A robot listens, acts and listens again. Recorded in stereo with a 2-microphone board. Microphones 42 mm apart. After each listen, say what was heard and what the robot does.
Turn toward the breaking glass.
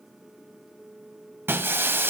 The breaking glass: about 65° right or 115° right. Turn 65° right.
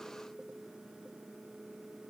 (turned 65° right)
Keep listening.
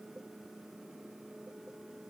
I heard breaking glass, but can't make it out now. It was about straight ahead or 50° right.